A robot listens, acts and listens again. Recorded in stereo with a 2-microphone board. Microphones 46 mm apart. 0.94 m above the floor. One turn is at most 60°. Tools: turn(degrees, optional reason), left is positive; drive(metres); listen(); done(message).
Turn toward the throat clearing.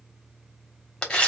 listen()
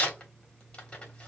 listen()
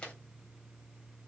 done("I can't make out throat clearing, only tearing paper.")